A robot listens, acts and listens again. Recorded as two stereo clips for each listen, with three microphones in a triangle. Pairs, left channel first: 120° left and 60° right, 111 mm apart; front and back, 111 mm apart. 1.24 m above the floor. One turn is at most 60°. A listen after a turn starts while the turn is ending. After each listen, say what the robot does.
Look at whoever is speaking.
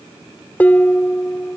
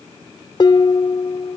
Keep listening.
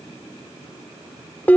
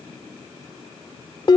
Keep listening.
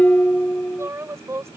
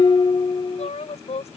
Facing the woman speaking.